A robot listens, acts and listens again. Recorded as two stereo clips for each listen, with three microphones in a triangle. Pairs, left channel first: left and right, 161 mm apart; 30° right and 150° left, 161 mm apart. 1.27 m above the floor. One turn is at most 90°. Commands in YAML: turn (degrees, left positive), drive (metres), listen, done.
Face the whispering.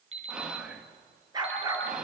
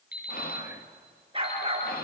done: "Found it: whispering, straight ahead."